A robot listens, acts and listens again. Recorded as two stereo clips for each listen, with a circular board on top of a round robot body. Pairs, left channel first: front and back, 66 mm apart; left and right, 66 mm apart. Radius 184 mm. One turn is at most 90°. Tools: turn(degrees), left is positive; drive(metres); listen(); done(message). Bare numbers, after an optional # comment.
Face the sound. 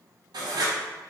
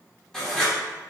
# The writing: 175° left.
turn(90)
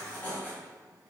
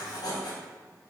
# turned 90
# The writing is now 70° left.
turn(70)
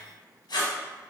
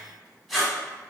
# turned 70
done("Found it: writing, straight ahead.")